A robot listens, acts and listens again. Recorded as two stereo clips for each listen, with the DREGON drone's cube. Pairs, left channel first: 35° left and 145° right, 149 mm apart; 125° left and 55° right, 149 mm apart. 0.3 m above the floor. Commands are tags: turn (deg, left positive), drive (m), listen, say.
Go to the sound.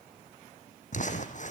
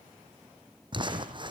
<drive m="1.0"/>
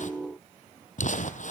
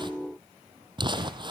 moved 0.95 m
<drive m="1.0"/>
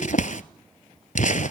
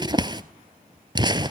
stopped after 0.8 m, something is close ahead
<say>Arrived at the crumpling, straight ahead.</say>